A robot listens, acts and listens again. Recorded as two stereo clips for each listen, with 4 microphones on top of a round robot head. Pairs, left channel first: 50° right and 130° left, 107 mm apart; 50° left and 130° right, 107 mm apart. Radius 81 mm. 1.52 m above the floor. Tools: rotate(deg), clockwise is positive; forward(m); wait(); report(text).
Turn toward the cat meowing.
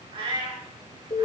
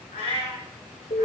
rotate(-85)
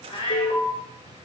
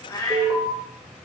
report("Facing the cat meowing, 2 to 4 m away.")